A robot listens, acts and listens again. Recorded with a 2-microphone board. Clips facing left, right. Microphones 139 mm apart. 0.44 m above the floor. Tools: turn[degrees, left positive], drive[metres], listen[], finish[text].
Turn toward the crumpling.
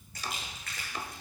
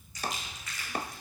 Thought: The crumpling: about 55° left or 125° left.
Action: turn[55]
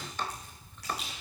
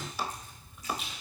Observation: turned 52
Thought: So it is at 70° left.
Action: turn[70]
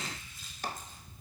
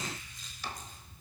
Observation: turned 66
Action: finish[Found it: crumpling, straight ahead, over 4 m away.]